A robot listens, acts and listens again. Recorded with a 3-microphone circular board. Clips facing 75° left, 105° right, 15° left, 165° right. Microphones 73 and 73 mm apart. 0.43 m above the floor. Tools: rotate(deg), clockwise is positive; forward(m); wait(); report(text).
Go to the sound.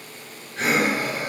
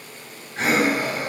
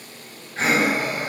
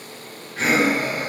rotate(45)
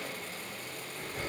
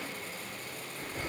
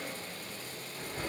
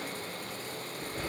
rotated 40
forward(1.0)
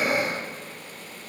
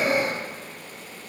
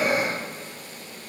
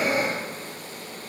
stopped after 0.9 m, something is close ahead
report("Arrived at the breathing, straight ahead.")